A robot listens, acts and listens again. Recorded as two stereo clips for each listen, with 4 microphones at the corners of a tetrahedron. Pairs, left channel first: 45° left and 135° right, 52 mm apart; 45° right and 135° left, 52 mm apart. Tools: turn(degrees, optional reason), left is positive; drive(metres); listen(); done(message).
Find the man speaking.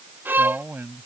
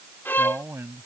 turn(degrees=175, reason="The man speaking: 175° left.")
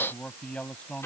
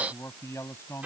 turn(degrees=-25, reason="The man speaking is now 25° right.")
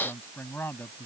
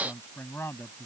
done("Facing the man speaking.")